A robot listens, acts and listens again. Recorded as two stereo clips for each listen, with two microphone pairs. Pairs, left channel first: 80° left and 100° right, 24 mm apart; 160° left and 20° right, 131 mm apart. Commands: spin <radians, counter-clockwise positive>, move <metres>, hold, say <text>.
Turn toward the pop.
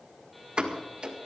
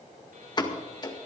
spin -2.53
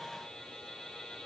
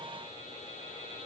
say Facing where the pop came from. I can't hear it now.